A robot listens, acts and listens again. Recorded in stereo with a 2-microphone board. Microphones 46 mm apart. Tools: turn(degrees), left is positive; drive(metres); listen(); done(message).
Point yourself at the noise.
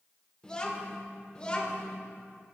turn(degrees=20)
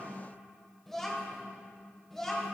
turn(degrees=30)
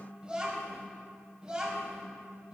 turn(degrees=-20)
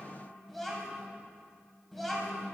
done("Found it: a child speaking, straight ahead, 2 to 4 m away.")